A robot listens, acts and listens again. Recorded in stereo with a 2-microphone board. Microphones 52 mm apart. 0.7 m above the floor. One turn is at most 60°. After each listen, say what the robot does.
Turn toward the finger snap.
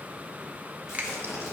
Turn 30° right.
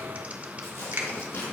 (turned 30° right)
Turn 60° right.
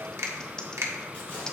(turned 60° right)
Turn 60° right.
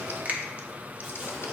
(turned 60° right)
Turn 30° right.
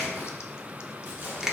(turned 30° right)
Turn 10° right.
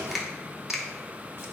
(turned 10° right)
Found it: a finger snap, straight ahead.